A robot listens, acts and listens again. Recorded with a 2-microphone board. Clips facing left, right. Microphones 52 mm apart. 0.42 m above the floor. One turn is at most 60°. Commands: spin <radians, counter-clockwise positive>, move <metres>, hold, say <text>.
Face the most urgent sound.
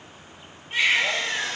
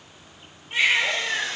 spin 0.52
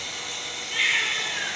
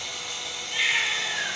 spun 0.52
spin 1.05
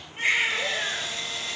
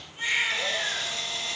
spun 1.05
spin 1.05
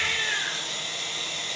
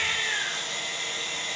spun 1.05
spin 0.70
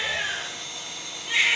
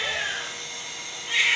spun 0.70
say Facing the baby crying, over 4 m away.